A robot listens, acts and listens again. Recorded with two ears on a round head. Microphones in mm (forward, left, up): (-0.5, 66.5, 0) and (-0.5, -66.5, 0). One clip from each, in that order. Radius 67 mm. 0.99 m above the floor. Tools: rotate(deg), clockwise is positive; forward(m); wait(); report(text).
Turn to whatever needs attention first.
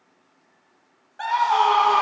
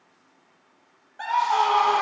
rotate(-30)
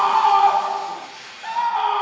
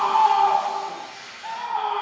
rotate(-140)
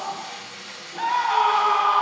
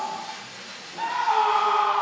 rotate(-25)
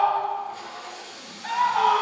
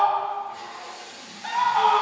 rotate(15)
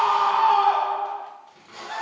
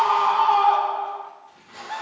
report("Facing the scream.")